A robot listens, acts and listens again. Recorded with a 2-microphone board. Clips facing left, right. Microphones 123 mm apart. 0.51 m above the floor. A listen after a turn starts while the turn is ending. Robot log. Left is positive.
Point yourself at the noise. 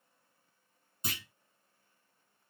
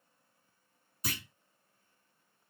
note: The clunk: about 25° left or 155° left.
cmd yaw +25
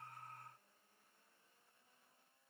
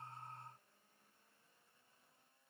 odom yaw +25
cmd idle
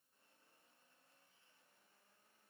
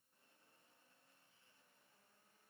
end: I heard a clunk, but can't make it out now. It was about straight ahead or 130° left.